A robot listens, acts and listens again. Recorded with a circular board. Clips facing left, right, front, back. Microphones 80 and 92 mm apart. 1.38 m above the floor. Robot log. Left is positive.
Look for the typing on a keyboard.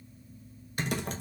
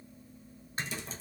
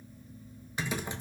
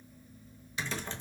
note: The typing on a keyboard: 75° left.
cmd yaw +75
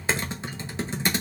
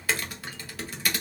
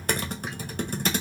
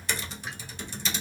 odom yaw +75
note: The typing on a keyboard is now 25° left.
cmd yaw +25
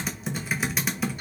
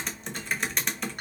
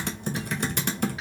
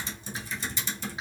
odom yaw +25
end: Facing the typing on a keyboard, 1 to 2 m away.